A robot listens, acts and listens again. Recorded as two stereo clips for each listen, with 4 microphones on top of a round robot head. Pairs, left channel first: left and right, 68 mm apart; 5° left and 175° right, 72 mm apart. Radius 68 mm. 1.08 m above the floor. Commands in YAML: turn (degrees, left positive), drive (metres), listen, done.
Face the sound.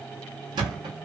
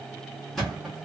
turn: -80
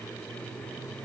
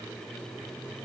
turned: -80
done: "I heard a thud from this way, but can't make it out now."